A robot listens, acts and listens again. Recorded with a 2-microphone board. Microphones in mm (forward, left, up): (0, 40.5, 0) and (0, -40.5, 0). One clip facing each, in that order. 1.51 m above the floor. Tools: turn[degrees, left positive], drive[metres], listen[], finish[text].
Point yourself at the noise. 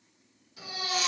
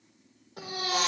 Thought: The baby crying: about 50° right or 130° right.
Action: turn[-50]
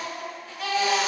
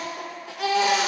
Thought: So it is at 75° right.
Action: turn[-75]
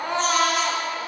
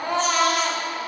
Action: finish[Found it: a baby crying, straight ahead, 1 to 2 m away.]